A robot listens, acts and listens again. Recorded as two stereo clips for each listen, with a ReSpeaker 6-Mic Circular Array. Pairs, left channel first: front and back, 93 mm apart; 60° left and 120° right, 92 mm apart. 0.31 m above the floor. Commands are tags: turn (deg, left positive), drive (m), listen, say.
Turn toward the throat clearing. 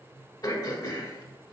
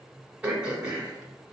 <turn deg="-40"/>
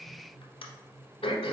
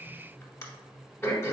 <say>Facing the throat clearing.</say>